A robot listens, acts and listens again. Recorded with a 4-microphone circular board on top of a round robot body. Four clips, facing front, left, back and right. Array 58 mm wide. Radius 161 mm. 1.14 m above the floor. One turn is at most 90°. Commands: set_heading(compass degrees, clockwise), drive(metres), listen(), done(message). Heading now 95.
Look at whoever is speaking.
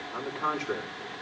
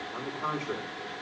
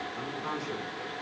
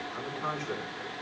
set_heading(75)
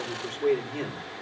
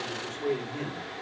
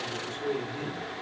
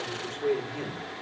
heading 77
done("Facing the man speaking.")